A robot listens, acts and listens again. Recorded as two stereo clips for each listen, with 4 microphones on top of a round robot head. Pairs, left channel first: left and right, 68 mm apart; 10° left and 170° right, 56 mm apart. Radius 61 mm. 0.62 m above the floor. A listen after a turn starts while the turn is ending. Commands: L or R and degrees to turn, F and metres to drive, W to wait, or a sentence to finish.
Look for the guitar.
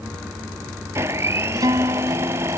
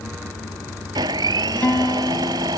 R65
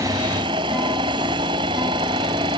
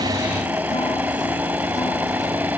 W
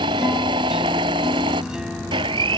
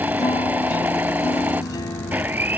W
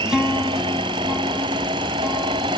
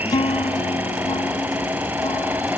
R10
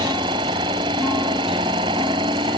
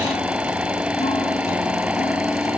W
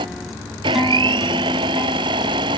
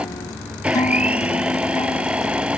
W
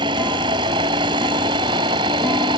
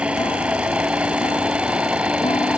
Facing where the guitar came from. I can't hear it now.